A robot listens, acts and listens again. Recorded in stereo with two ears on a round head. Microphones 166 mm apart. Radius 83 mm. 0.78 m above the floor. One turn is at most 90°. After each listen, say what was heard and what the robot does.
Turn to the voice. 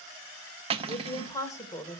Turn 30° left.
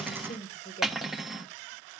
So it is at 150° left. Turn 90° left.
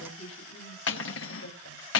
The woman speaking is now 80° left. Turn 80° left.
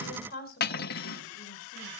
The woman speaking is now 55° left. Turn 55° left.
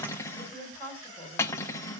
The woman speaking is now 15° left. Turn 15° left.
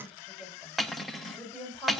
Found it: a woman speaking, straight ahead.